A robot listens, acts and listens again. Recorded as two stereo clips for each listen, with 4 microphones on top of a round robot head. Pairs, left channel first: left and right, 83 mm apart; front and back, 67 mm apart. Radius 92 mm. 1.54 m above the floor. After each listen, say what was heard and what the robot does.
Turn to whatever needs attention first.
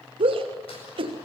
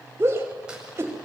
The shout: 120° right. Turn 120° right.
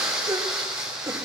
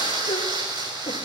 The shout is now 35° right. Turn 35° right.
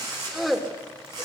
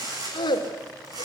Facing the shout, 2 to 4 m away.